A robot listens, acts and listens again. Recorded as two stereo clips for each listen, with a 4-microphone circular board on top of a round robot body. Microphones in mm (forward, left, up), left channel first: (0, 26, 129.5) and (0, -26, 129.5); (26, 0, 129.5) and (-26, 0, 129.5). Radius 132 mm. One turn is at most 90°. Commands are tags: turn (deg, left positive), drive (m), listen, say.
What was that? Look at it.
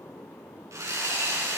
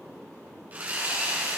<turn deg="-90"/>
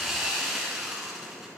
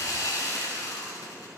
<turn deg="-10"/>
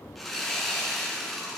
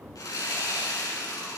<say>Found it: sawing, straight ahead, over 4 m away.</say>